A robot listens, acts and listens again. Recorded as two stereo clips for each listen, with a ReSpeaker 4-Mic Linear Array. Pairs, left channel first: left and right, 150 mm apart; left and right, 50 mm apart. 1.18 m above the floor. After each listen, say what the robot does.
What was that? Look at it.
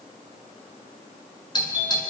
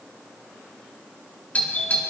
Turn 30° left.
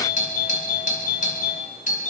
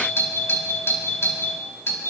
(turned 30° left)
Turn 120° left.
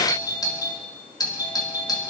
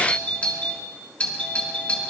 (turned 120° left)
Turn 30° left.
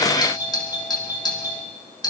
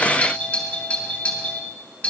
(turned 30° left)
Turn 30° left.
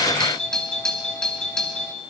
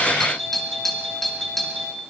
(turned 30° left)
Facing the doorbell.